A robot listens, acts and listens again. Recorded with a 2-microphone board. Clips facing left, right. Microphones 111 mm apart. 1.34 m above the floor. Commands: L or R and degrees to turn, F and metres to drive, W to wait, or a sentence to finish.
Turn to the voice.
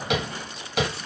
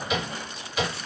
W
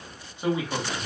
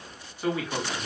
L20
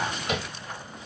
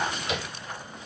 W
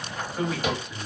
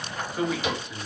Facing the man speaking.